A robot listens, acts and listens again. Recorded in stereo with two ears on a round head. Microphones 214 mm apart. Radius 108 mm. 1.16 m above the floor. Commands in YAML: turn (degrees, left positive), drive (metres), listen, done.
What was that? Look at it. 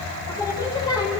turn: 20
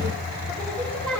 turn: 30
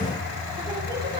listen: true
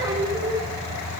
turn: -15
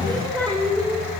done: "Facing the singing."